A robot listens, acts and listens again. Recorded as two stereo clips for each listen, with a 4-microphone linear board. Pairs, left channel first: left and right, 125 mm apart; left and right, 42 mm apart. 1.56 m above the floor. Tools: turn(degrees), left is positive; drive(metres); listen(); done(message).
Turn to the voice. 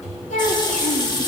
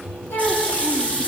turn(degrees=70)
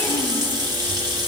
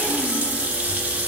listen()
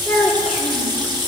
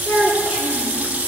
done("Found it: a child speaking, straight ahead.")